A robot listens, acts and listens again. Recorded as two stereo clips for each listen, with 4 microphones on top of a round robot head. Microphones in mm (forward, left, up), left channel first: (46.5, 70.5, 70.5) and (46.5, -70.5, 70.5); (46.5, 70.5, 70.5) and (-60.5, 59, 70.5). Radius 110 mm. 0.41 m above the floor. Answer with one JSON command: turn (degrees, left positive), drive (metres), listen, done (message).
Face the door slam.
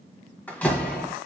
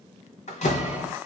{"turn": 10}
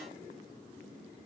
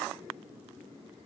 {"done": "Facing where the door slam came from. I can't hear it now."}